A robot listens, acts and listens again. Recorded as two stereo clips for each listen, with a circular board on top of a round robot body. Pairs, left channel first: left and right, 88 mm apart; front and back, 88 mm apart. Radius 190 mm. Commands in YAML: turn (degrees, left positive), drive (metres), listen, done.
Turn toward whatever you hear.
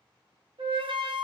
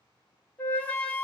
turn: -75
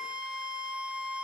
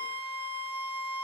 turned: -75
turn: -10
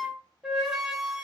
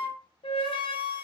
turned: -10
done: "Found it: a flute, straight ahead."